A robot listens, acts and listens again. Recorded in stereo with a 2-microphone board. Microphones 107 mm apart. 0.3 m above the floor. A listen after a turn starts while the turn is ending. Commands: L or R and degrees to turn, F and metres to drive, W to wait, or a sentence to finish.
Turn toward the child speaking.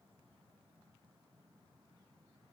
W
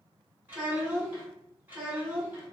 R20
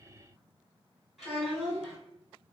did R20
Facing the child speaking, 1 to 2 m away.